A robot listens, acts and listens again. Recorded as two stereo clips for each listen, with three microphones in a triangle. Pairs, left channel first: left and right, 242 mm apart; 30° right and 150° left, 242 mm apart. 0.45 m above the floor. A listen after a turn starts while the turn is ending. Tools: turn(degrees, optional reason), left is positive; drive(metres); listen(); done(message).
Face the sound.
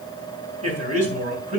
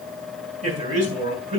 turn(degrees=-150, reason="The man speaking: 150° right.")
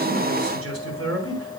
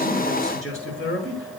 turn(degrees=-65, reason="The man speaking is now 65° right.")
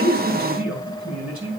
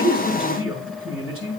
done("Found it: a man speaking, straight ahead, over 4 m away.")